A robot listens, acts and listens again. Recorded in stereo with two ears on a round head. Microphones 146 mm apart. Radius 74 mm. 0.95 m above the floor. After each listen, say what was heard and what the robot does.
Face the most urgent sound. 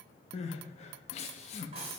The crying: about 40° left or 140° left. Turn 40° left.
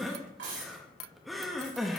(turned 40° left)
Facing the crying.